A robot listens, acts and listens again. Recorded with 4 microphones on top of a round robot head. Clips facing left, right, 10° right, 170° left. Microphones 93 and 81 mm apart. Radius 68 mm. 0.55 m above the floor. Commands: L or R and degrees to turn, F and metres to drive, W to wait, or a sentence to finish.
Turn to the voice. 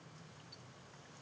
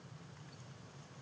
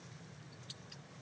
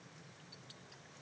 W
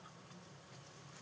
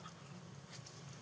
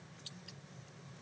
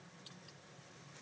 W
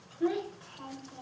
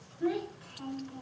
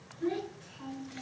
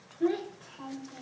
L145
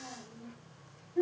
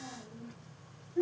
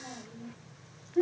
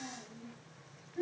L10
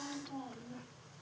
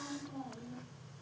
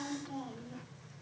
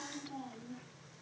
Facing the child speaking, 2 to 4 m away.